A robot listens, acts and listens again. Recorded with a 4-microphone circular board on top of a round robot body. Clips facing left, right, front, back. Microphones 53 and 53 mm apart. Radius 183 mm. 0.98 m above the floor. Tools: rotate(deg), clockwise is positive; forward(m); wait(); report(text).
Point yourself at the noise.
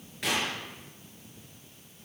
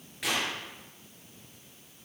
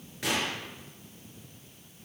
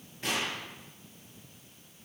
report("Found it: a gunshot, straight ahead, over 4 m away.")